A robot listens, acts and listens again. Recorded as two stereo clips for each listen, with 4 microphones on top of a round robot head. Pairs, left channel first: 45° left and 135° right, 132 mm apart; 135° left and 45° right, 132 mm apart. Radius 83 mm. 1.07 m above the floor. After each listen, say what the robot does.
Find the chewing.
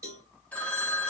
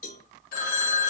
Keep listening.
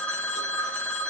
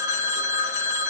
Keep listening.
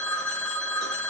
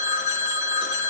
I can't make out chewing, only a phone ringing and a cowbell.